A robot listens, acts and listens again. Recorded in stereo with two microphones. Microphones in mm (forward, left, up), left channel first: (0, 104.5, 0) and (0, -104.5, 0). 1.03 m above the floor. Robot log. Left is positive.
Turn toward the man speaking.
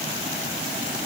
cmd idle
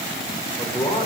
note: The man speaking: about 20° left or 160° left.
cmd yaw +20
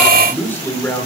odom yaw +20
cmd yaw +30
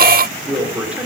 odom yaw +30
end: Found it: a man speaking, straight ahead, 2 to 4 m away.